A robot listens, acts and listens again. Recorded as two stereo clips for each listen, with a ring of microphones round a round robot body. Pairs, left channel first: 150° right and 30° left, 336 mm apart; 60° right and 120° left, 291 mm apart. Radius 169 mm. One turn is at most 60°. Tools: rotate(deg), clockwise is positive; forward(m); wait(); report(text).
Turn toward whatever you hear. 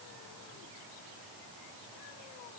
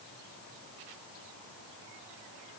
wait()
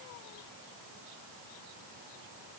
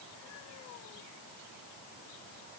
wait()
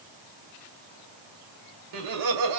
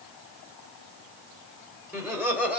rotate(-30)
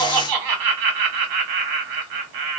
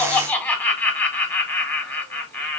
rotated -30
rotate(-20)
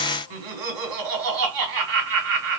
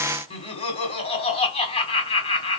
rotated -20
report("Facing the laughter, 1 to 2 m away.")